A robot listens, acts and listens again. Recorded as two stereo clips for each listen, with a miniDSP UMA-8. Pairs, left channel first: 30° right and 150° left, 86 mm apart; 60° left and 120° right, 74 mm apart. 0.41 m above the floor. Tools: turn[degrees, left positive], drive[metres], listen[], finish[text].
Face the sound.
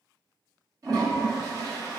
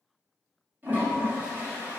Thought: The toilet flushing: 175° right.
Action: turn[-175]
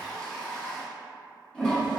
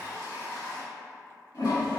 Thought: The toilet flushing is now 50° left.
Action: turn[50]
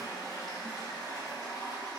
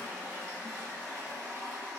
Thought: The toilet flushing is now 10° right.
Action: turn[-10]
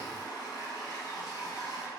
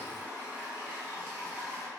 Action: finish[Found it: a toilet flushing, straight ahead, 1 to 2 m away.]